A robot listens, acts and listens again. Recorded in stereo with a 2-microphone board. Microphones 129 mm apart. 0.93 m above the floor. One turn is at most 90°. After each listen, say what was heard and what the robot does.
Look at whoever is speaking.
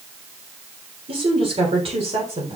The woman speaking: about 55° right or 125° right. Turn 55° right.
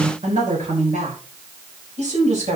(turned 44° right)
So it is at 65° right. Turn 65° right.
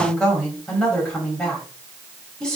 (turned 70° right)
Facing the woman speaking, over 4 m away.